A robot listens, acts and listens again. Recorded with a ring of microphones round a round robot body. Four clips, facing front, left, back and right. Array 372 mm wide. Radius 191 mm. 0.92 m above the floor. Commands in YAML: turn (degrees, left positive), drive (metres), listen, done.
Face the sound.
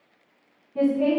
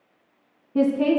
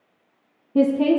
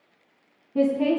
turn: 160
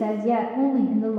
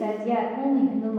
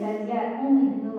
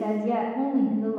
turn: -10
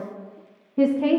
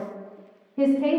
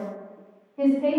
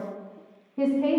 done: "Found it: a woman speaking, straight ahead, under 1 m away."